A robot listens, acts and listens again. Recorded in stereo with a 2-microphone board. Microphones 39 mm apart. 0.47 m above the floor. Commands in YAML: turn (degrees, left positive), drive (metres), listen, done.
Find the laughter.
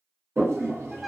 listen: true
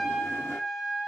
listen: true
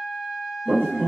turn: -50
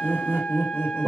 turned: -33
turn: -80
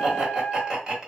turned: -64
turn: -15
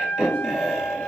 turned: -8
done: "Found it: laughter, straight ahead, 1 to 2 m away."